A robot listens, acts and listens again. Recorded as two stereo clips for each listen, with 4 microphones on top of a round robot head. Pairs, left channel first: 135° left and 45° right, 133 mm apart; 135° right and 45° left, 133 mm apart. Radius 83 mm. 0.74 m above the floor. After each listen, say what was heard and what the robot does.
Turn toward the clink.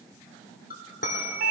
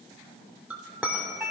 The clink: 125° left. Turn 125° left.
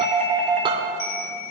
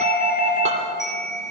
Keep listening.
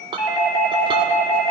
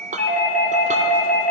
The clink is now 10° left. Turn 10° left.
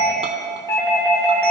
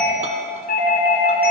Keep listening.
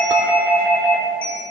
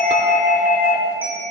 Keep listening.
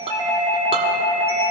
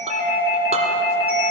I heard a clink from this way, but can't make it out now.